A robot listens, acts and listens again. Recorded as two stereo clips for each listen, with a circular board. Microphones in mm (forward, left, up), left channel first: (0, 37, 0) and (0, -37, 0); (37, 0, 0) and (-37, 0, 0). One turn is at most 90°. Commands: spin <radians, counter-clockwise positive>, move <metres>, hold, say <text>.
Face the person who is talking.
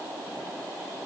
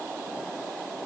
hold
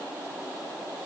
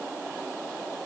hold
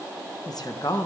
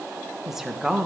spin 1.57
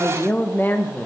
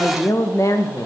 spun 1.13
spin 0.52
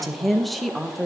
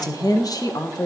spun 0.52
say Facing the woman speaking, 1 to 2 m away.